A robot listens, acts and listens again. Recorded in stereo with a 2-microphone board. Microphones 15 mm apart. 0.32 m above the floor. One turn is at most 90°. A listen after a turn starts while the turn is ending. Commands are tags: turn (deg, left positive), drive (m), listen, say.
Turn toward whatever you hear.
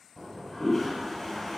<turn deg="30"/>
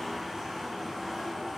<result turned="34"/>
<turn deg="-25"/>
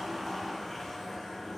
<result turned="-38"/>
<turn deg="15"/>
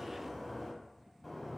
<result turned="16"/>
<say>Found it: a toilet flushing, straight ahead.</say>